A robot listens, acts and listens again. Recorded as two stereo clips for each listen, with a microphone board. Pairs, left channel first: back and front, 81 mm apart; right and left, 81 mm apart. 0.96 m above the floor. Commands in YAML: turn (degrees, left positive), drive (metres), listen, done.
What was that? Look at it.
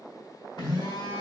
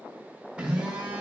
turn: 165
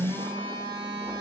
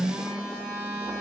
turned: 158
done: "Facing the phone buzzing."